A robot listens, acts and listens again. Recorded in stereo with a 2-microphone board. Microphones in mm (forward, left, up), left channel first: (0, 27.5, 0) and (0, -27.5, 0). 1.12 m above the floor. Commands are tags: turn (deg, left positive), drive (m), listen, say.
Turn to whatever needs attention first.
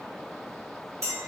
<listen/>
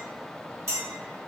<listen/>
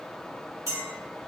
<say>I can't make out anything urgent to turn to.</say>